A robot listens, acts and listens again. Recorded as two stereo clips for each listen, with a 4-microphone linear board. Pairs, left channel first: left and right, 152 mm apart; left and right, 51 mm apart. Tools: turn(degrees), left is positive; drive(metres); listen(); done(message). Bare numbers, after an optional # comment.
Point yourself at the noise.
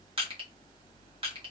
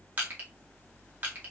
# The crushing: about 35° right or 145° right.
turn(-35)
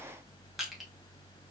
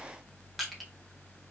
done("Facing the crushing, 1 to 2 m away.")